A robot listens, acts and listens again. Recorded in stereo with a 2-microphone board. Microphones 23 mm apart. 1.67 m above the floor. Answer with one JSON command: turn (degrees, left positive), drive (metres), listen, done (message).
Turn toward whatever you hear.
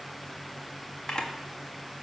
{"turn": 35}
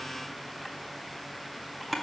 {"done": "Found it: a camera shutter, straight ahead, 1 to 2 m away."}